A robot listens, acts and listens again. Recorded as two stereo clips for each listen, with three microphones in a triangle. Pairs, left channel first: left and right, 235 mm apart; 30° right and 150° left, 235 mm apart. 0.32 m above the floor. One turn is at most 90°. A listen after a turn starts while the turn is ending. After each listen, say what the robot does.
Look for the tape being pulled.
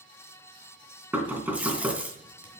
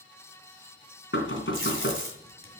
Turn 90° right.
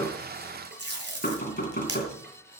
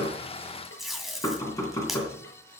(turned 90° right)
Turn 90° right.
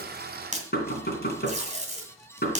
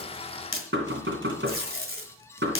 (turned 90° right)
Turn 35° right.
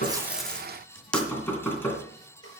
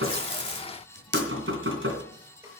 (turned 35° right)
Found it: tape being pulled, straight ahead, 2 to 4 m away.